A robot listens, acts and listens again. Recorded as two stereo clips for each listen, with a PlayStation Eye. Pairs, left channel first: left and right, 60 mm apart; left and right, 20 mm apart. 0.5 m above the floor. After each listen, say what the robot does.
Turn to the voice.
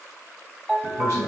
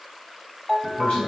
Turn 65° left.
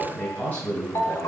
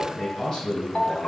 Turn 30° left.
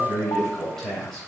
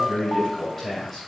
Found it: a man speaking, straight ahead, 2 to 4 m away.